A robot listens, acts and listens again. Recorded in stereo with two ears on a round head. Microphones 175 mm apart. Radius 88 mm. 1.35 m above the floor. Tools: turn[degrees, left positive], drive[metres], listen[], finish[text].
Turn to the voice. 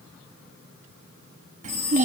Thought: The child speaking: about 40° right or 140° right.
Action: turn[-40]
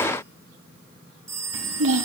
Thought: So it is at 95° right.
Action: turn[-95]
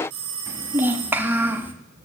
Thought: The child speaking is now 10° right.
Action: turn[-10]
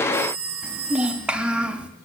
Action: finish[Found it: a child speaking, straight ahead, 1 to 2 m away.]